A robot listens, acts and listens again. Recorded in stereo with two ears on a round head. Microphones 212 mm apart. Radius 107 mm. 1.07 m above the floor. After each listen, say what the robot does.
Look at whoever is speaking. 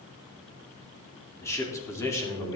Turn 15° left.
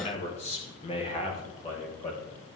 Turn 30° left.
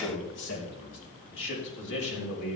Turn 120° left.
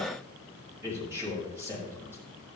Turn 15° right.
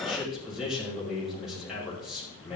Facing the man speaking, over 4 m away.